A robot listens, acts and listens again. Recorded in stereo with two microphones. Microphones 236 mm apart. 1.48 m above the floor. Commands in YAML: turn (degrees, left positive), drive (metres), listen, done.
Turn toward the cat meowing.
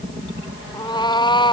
turn: 20
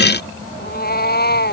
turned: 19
turn: 135
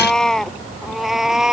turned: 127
done: "Found it: a cat meowing, straight ahead."